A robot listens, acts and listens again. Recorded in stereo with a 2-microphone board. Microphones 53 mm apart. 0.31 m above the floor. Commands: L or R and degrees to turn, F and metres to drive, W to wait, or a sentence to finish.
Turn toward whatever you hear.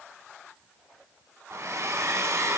R65
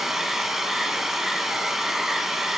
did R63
R10
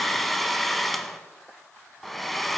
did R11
Facing the hair dryer, under 1 m away.